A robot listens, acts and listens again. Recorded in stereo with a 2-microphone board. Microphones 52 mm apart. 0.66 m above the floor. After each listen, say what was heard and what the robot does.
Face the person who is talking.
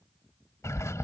Keep listening.
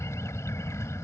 Keep listening.
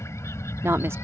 The woman speaking: about 55° right or 125° right. Turn 55° right.
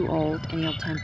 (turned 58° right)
So it is at 20° right. Turn 20° right.
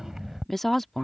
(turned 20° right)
Facing the woman speaking.